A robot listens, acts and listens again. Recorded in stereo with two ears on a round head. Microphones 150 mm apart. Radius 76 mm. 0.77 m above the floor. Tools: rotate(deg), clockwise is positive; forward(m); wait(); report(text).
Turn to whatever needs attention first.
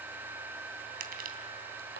wait()
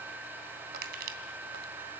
wait()
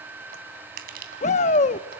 rotate(-45)
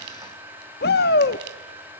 rotate(-85)
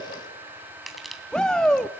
report("Found it: a shout, straight ahead, under 1 m away.")